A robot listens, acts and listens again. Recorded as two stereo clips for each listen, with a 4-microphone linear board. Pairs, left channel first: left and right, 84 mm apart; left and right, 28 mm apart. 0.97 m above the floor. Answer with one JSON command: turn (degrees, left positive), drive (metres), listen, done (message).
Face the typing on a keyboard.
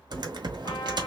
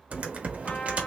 {"turn": -60}
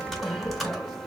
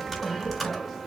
{"done": "Found it: typing on a keyboard, straight ahead, under 1 m away."}